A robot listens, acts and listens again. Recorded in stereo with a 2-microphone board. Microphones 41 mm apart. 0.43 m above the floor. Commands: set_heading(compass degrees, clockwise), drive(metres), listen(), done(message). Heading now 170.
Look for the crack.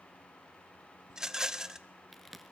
set_heading(140)
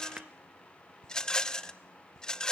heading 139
listen()
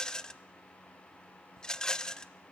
done("I heard a crack, but can't make it out now. It was about 30° right or 150° left.")